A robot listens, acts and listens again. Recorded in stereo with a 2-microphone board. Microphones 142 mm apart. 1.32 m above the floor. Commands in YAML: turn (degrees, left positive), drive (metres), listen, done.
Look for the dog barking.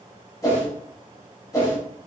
listen: true
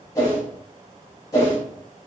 listen: true
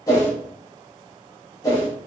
done: "I can't make out a dog barking to turn to."